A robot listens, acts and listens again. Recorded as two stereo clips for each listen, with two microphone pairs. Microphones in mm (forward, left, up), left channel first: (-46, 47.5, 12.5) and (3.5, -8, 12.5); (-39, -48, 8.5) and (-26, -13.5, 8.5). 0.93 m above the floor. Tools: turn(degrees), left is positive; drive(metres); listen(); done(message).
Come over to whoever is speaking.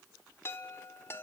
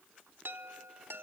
listen()
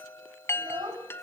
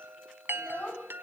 turn(degrees=-70)
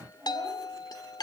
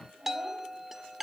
turn(degrees=10)
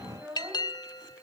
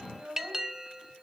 drive(metres=1.0)
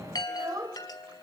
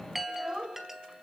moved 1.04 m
drive(metres=1.0)
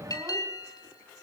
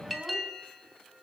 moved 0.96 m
listen()
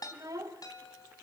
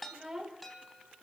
drive(metres=1.0)
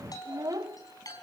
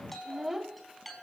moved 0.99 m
turn(degrees=-10)
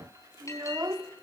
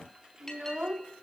drive(metres=1.0)
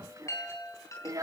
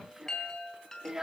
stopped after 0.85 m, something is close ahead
done("Arrived at the child speaking, straight ahead.")